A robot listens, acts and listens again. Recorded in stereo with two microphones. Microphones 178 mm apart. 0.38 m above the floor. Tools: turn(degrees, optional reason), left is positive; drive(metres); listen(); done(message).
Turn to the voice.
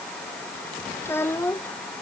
turn(degrees=30)
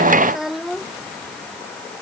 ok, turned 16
done("Found it: a child speaking, straight ahead.")